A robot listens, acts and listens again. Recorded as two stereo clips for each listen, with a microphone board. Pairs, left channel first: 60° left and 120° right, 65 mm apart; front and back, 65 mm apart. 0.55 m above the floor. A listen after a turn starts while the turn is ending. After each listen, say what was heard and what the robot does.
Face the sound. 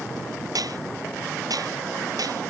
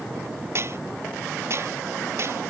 The dishes clattering: 135° right. Turn 135° right.
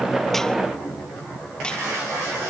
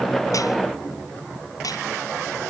The dishes clattering is now 15° right. Turn 15° right.
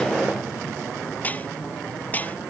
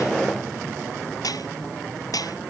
Facing the dishes clattering.